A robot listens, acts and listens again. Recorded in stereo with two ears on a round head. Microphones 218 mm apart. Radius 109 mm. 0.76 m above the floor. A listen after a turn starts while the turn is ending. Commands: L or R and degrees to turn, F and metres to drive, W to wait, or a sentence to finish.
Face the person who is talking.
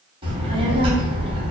R20
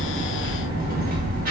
R135
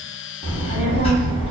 L25
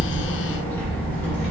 L10
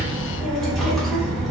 Facing the child speaking.